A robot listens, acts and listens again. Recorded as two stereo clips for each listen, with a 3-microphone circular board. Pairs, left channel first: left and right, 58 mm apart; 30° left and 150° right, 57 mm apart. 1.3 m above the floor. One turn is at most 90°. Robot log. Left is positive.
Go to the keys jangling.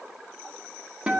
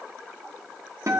cmd idle
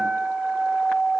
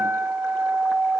cmd idle
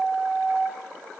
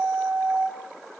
end: I can't make out keys jangling to turn to.